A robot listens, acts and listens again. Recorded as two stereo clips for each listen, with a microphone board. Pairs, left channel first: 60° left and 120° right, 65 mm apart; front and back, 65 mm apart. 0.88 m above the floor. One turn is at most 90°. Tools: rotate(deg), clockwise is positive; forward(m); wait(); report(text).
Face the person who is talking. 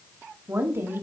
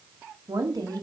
rotate(90)
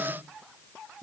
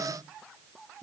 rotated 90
rotate(65)
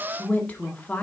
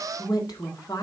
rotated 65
report("Found it: a woman speaking, straight ahead, 1 to 2 m away.")